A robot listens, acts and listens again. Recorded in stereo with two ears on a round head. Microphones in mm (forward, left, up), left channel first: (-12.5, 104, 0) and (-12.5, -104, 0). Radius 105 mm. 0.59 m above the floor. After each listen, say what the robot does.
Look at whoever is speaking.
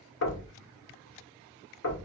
Keep listening.
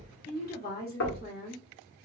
Turn 45° left.
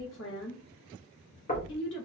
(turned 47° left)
Turn 80° left.
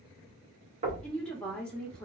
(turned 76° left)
Found it: a woman speaking, straight ahead.